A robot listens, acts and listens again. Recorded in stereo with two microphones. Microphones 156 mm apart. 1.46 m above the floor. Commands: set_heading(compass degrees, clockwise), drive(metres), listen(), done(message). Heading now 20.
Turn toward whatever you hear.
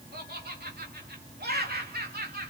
set_heading(110)
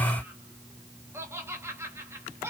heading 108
set_heading(123)
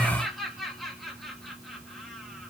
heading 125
done("Found it: laughter, straight ahead.")